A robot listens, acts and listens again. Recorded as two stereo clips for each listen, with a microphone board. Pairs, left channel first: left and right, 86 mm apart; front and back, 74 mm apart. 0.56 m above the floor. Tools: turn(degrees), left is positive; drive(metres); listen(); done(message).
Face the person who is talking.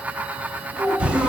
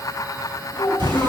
turn(degrees=-10)
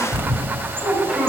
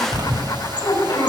turn(degrees=-15)
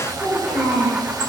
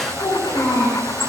done("Facing the child speaking.")